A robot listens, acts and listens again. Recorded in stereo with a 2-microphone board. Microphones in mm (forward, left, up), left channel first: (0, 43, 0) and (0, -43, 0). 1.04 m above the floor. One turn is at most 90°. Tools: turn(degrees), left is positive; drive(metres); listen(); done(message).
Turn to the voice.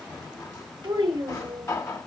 turn(degrees=-90)
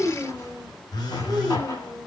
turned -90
done("Facing the child speaking.")